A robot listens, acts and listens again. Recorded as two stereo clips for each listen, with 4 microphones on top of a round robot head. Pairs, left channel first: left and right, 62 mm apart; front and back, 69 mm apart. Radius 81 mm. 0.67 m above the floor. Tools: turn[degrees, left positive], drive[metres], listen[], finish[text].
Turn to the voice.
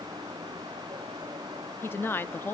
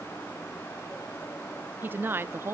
Thought: The woman speaking: 140° left.
Action: turn[140]
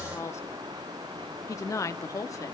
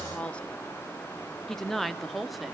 Thought: The woman speaking is now 90° left.
Action: turn[90]
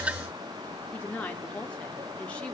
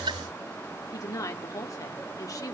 Thought: The woman speaking is now 20° left.
Action: turn[20]
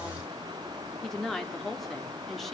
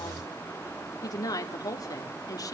Action: finish[Facing the woman speaking.]